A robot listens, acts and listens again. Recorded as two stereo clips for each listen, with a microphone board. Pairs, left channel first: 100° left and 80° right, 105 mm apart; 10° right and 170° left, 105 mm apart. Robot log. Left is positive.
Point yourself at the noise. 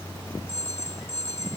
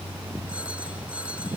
note: The phone ringing: 90° left.
cmd yaw +90
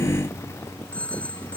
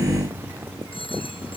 note: The phone ringing is now 25° left.
cmd yaw +25
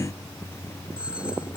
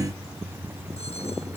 cmd idle
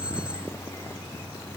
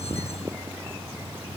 cmd idle
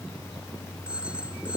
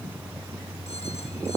end: Facing the phone ringing.